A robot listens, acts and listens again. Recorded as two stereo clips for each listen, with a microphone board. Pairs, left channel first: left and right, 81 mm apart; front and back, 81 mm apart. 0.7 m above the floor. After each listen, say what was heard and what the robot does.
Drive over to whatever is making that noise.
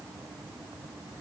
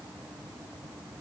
Keep listening.
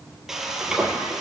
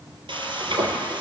The frying: 175° right. Turn 175° right.
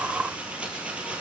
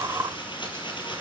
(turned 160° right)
The frying is now 15° right. Turn 15° right.
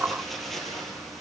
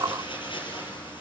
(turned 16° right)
Drive 1.0 m forward.
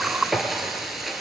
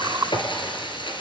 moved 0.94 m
Drive 1.0 m forward.
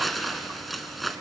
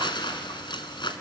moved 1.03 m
Drive 1.0 m forward.
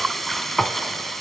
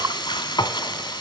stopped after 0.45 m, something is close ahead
Arrived at the frying, straight ahead.